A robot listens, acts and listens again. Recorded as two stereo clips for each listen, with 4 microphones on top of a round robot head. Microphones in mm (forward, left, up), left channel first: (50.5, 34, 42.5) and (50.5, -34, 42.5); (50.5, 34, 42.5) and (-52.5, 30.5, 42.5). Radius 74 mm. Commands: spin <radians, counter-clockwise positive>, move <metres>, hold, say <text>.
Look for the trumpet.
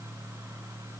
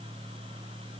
hold
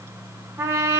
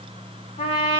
spin -0.79
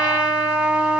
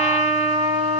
spin -0.35
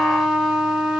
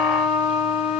say Found it: a trumpet, straight ahead, 1 to 2 m away.